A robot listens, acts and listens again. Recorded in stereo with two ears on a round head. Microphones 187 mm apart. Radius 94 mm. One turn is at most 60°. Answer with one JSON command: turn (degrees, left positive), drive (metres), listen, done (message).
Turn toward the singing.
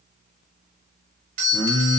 {"turn": 30}
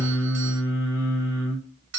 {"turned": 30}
{"turn": -15}
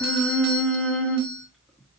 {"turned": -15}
{"done": "Facing the singing, 1 to 2 m away."}